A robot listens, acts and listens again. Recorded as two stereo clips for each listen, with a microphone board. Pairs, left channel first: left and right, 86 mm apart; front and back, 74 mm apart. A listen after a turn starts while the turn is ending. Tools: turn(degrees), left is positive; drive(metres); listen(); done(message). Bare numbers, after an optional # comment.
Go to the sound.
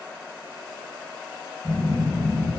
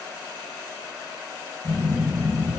drive(1.0)
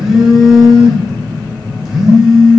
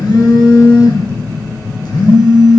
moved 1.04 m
drive(1.0)
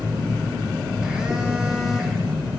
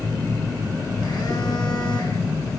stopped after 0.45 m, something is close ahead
# The phone buzzing is now 10° right.
turn(-10)
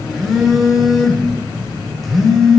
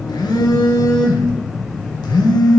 done("Arrived at the phone buzzing, straight ahead.")